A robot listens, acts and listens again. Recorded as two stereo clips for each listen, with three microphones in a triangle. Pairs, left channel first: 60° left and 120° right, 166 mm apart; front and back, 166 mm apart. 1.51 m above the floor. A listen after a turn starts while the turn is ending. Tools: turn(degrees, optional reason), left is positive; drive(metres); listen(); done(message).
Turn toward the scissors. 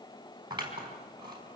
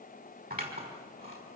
turn(degrees=180, reason="The scissors: straight behind.")
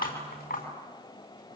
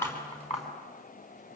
turn(degrees=45, reason="The scissors is now 45° left.")
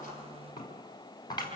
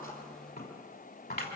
done("Found it: scissors, straight ahead.")